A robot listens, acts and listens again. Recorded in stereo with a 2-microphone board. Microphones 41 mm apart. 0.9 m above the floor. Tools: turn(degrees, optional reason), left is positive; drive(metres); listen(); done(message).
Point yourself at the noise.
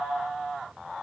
listen()
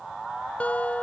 turn(degrees=40, reason="The guitar: about 40° left or 140° left.")
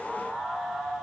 listen()
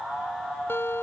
turn(degrees=100, reason="So it is at 100° left.")
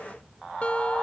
turn(degrees=25, reason="The guitar is now 25° left.")
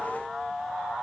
listen()
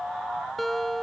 done("Facing the guitar.")